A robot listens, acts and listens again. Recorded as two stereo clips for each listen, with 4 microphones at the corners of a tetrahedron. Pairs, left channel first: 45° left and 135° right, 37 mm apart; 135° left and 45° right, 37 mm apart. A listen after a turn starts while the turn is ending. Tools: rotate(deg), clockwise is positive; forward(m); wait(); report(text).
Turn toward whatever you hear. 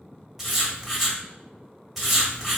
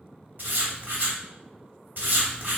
rotate(50)
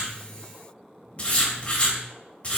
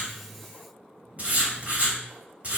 report("Found it: writing, straight ahead.")